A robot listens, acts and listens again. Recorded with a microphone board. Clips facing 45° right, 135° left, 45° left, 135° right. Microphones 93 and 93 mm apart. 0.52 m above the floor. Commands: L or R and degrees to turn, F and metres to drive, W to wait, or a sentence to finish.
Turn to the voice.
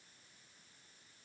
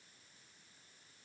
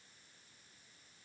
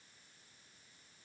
W
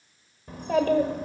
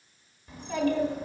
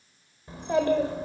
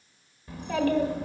R15
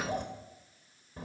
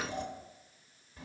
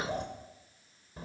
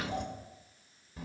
Facing the child speaking.